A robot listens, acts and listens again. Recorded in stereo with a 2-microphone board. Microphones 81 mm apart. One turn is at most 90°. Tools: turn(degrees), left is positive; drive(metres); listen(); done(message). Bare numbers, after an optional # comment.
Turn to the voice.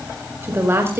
# The woman speaking: about 30° right or 150° right.
turn(-30)
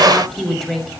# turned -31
done("Found it: a woman speaking, straight ahead.")